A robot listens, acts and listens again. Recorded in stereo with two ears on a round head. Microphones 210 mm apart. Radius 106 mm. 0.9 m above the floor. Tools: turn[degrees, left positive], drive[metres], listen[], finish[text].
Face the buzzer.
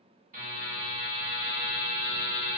Thought: The buzzer: about 40° right or 140° right.
Action: turn[-40]
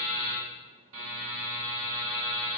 Thought: So it is at 100° right.
Action: turn[-100]
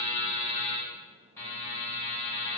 Thought: The buzzer is now 15° left.
Action: turn[15]
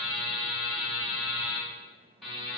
Action: finish[Found it: a buzzer, straight ahead, 1 to 2 m away.]